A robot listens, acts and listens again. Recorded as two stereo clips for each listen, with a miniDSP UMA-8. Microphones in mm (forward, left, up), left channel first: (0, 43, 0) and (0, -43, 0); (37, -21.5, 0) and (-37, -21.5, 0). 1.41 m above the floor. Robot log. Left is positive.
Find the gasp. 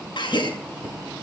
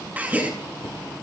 note: The gasp: 110° left.
cmd yaw +110
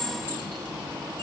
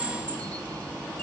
end: Facing where the gasp came from. I can't hear it now.